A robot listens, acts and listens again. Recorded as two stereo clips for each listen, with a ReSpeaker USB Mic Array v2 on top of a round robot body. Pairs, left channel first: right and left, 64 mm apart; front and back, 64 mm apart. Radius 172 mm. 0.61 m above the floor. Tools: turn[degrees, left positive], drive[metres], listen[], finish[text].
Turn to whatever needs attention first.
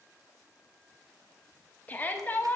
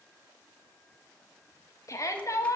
Thought: The shout: 30° right.
Action: turn[-30]
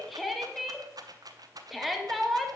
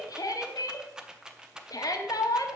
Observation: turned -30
Action: finish[Facing the shout.]